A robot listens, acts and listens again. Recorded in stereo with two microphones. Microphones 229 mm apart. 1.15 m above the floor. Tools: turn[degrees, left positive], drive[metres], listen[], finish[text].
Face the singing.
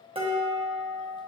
Action: listen[]
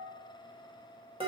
Action: listen[]
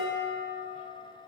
Action: finish[I can't make out singing, only dishes clattering.]